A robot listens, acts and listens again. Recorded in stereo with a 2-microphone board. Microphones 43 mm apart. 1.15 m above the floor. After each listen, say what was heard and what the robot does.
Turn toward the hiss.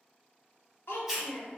Turn 30° right.
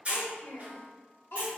So it is at 140° right. Turn 140° right.
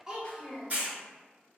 The hiss is now 50° right. Turn 50° right.
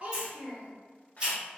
The hiss is now 25° right. Turn 25° right.
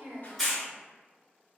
Facing the hiss, 1 to 2 m away.